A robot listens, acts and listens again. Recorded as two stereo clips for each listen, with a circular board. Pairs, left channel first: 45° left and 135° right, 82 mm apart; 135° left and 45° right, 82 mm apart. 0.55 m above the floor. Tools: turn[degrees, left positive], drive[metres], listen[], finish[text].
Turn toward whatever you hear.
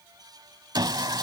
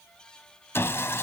Thought: The sawing: 165° right.
Action: turn[-165]
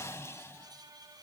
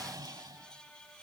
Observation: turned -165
Thought: The sawing is now 10° right.
Action: turn[-10]
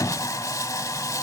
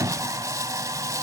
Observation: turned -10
Action: finish[Found it: sawing, straight ahead.]